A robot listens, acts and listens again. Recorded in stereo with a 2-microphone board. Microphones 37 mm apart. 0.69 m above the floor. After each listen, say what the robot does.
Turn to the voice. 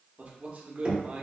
Turn 35° right.
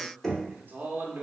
Turn 95° right.
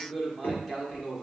Turn 10° right.
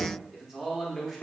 Facing the man speaking.